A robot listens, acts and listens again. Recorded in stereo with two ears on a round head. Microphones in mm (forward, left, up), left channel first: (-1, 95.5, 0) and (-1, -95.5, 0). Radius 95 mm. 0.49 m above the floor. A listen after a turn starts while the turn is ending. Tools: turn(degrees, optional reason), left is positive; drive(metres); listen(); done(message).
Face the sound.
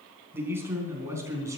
turn(degrees=-30)
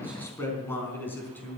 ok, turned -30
turn(degrees=10, reason="So it is at 10° left.")
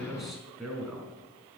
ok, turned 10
done("Found it: a man speaking, straight ahead.")